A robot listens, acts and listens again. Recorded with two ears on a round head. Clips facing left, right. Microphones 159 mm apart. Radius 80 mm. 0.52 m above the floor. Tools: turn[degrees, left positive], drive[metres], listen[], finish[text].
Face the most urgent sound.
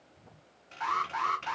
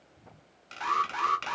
Thought: The alarm: about 35° right or 145° right.
Action: turn[-35]
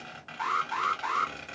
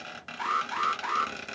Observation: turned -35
Action: finish[Facing the alarm, 1 to 2 m away.]